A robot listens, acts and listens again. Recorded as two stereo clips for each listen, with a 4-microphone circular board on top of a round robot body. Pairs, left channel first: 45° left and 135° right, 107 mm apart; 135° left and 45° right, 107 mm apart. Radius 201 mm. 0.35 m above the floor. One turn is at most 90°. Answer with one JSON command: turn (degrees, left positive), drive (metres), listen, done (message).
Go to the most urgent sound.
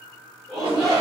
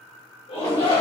{"turn": 90}
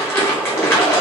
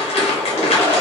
{"turn": 50}
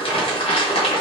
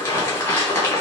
{"listen": true}
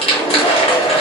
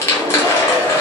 {"turn": 25}
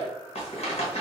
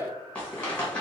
{"listen": true}
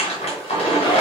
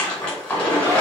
{"turn": 15}
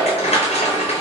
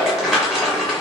{"listen": true}
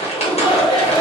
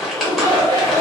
{"drive": 1.0}
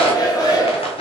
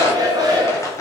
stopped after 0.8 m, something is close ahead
{"done": "Arrived at the shout, straight ahead."}